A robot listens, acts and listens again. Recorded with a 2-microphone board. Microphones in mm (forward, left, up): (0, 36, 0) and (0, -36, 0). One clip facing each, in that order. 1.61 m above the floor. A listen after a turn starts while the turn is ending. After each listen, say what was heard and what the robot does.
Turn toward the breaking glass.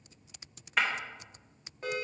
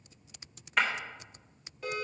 Turn 30° left.
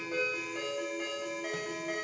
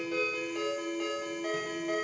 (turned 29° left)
Keep listening.
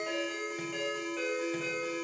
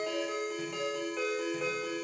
I heard breaking glass, but can't make it out now. It was about 30° right or 150° left.